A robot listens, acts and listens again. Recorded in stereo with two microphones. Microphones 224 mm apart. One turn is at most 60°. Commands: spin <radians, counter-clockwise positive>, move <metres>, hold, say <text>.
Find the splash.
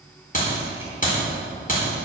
hold
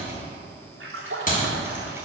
spin -1.05
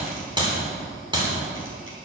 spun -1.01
hold
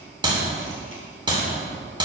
say I heard a splash, but can't make it out now. It was about 15° right or 50° right.